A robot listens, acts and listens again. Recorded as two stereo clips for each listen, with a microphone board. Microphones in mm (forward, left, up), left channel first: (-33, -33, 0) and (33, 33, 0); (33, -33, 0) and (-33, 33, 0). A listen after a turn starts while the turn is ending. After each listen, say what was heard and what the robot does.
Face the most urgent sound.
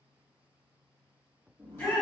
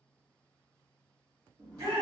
The shout: 160° left. Turn 160° left.
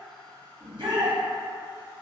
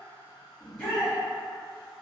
The shout is now 25° left. Turn 25° left.
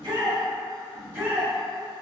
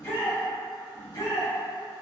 The shout is now 15° right. Turn 15° right.
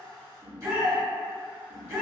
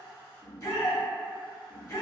Facing the shout.